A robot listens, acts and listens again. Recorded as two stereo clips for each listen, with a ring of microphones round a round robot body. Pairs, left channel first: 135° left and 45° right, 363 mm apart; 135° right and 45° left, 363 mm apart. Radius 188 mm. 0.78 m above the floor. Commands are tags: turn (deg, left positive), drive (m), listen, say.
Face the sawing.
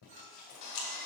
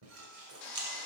<turn deg="175"/>
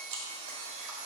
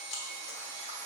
<say>Found it: sawing, straight ahead.</say>